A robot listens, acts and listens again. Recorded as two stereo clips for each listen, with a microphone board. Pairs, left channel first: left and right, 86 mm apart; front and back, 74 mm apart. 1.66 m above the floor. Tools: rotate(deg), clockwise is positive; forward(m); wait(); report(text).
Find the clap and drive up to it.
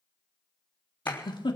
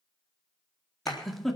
rotate(-25)
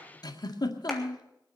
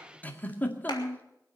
wait()
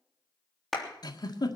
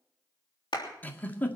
forward(1.0)
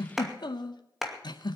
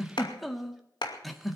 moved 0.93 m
forward(1.0)
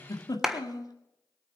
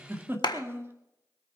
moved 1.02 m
forward(1.0)
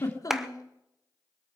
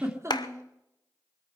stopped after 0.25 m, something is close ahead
report("Arrived at the clap, straight ahead.")